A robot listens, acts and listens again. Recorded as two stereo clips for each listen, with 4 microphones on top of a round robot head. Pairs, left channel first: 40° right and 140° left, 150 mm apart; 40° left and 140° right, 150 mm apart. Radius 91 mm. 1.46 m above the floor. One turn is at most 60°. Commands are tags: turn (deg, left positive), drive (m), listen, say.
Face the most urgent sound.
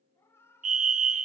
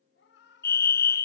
<turn deg="60"/>
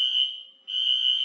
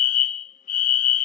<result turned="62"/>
<turn deg="50"/>
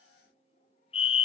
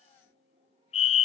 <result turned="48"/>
<say>Facing the fire alarm, 1 to 2 m away.</say>